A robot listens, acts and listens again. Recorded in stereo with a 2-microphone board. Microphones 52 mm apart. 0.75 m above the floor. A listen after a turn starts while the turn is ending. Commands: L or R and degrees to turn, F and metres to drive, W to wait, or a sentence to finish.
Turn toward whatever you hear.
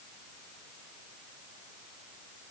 W
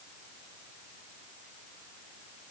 W
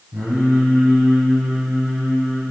R40
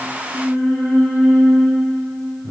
R100
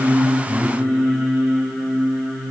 L10
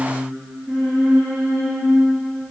Facing the singing, over 4 m away.